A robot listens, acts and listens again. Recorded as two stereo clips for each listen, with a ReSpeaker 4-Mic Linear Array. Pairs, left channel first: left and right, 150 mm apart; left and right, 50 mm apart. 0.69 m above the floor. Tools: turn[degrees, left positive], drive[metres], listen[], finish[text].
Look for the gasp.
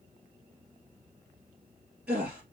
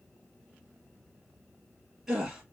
Action: turn[-30]
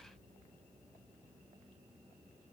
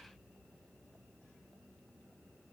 Action: listen[]
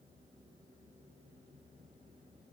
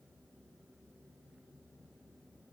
Action: finish[I heard a gasp, but can't make it out now. It was about 25° left or 145° right.]